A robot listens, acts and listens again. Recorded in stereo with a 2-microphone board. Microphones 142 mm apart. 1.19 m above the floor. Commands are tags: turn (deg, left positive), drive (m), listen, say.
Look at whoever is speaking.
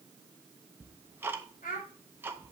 <turn deg="90"/>
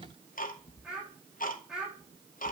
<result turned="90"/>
<say>Facing the child speaking.</say>